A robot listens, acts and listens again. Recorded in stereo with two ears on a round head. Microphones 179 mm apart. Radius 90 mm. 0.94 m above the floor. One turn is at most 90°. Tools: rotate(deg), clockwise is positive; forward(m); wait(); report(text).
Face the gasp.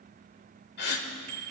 rotate(-55)
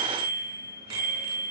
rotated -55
wait()
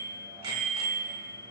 report("I heard a gasp, but can't make it out now. It was about straight ahead or 70° left.")